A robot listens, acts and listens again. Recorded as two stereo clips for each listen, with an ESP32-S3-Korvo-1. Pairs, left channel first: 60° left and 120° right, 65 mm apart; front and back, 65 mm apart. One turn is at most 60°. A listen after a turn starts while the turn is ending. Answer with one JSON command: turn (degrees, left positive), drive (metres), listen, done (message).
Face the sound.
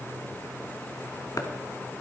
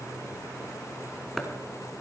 {"turn": 60}
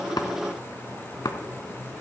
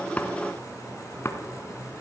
{"turn": 50}
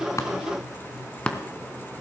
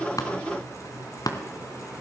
{"turn": -15}
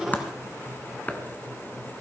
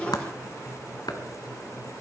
{"done": "Facing the chopping, 1 to 2 m away."}